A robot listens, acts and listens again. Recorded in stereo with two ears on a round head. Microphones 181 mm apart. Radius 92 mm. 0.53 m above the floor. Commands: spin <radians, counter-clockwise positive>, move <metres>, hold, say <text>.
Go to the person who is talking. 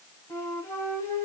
hold
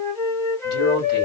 spin 1.05
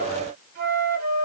hold
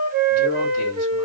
spin 0.87
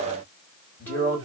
spin 0.17
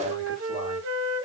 hold
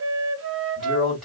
move 1.0
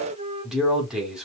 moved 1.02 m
move 1.0
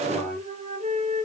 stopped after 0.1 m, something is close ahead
hold
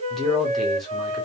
say I am next to the man speaking.